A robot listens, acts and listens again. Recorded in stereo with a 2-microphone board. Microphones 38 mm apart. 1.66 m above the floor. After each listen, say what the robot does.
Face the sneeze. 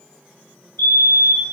Keep listening.
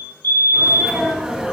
Turn 30° right.
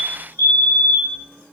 Keep listening.
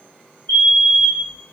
I heard a sneeze, but can't make it out now. It was about 15° left or 135° right.